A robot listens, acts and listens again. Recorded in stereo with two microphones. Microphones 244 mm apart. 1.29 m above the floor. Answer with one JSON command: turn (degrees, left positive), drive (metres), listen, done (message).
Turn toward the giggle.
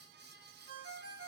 {"listen": true}
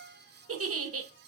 {"turn": -70}
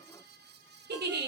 {"turn": -45}
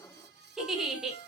{"done": "Facing the giggle, under 1 m away."}